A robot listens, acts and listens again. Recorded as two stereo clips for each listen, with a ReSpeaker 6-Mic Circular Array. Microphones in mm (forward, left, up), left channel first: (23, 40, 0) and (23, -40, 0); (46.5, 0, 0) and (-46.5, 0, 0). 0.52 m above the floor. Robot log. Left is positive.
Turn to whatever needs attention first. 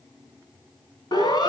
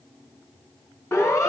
note: The siren: 65° left.
cmd yaw +65
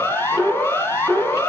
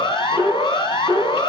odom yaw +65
note: The siren is now 35° left.
cmd yaw +35
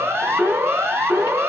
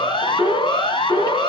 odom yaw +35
note: The siren is now 25° right.
cmd yaw -25
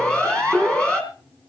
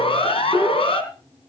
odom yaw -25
note: The siren is now 15° left.
cmd yaw +15
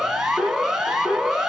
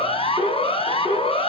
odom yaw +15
end: Found it: a siren, straight ahead.